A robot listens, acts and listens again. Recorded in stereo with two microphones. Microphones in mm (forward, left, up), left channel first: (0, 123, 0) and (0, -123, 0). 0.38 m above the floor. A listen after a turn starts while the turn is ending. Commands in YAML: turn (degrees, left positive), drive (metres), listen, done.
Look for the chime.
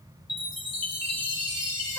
turn: 90
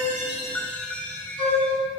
done: "Found it: a chime, straight ahead, 1 to 2 m away."